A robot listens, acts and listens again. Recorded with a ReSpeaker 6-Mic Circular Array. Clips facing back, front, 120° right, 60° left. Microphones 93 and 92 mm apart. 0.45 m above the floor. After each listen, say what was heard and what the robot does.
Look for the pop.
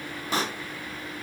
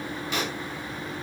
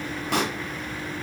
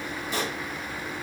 The pop: 130° right. Turn 130° right.
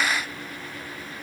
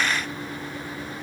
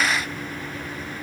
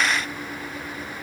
I heard a pop from this way, but can't make it out now.